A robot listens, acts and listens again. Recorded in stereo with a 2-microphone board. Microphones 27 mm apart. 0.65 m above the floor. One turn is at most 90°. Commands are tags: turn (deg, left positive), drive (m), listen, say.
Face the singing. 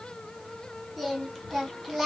<turn deg="-30"/>
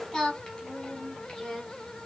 <turn deg="20"/>
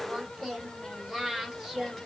<say>Found it: singing, straight ahead.</say>